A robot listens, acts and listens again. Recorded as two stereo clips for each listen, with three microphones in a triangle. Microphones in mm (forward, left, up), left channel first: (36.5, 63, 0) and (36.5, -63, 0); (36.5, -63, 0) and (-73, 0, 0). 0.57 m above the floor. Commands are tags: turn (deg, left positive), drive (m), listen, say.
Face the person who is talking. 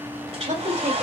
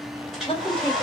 <turn deg="-75"/>
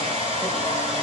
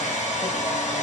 <listen/>
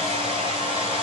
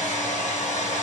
<listen/>
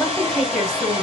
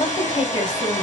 <say>Found it: a woman speaking, straight ahead.</say>